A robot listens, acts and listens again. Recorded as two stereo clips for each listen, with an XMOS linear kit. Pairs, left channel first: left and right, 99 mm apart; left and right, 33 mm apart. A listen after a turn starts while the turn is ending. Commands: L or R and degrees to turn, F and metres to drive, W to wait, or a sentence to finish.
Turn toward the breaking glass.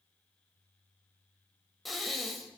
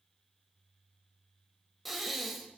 W
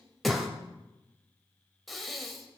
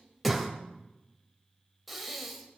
W
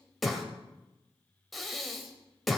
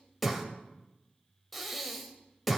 I can't make out breaking glass, only breathing.